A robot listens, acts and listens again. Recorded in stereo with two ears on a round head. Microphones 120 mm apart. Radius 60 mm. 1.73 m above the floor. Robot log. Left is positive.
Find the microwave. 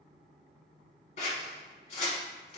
cmd idle
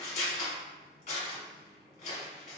cmd idle
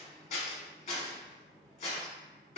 end: I can't make out a microwave to turn to.